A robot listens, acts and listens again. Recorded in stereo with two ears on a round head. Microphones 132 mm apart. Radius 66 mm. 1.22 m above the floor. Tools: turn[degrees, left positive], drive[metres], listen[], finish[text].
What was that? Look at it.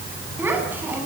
Action: turn[-30]
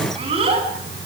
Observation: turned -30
Thought: So it is at 140° right.
Action: turn[-140]
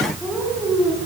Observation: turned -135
Thought: The child speaking is now 10° right.
Action: turn[-10]
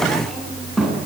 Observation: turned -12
Action: finish[Found it: a child speaking, straight ahead, over 4 m away.]